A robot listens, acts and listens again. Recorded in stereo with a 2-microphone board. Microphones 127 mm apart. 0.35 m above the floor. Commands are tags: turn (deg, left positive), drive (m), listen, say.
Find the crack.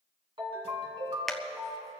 <turn deg="30"/>
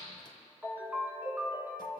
<listen/>
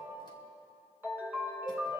<say>I heard a crack, but can't make it out now. It was about 30° right or 150° left.</say>